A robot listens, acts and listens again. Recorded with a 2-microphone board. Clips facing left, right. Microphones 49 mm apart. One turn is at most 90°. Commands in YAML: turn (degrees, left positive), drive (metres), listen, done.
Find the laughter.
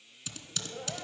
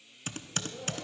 turn: 30
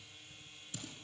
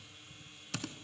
listen: true
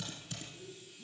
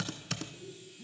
turn: -20
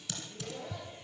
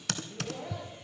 turn: -20
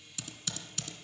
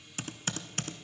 listen: true
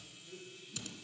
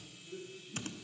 done: "Facing the laughter."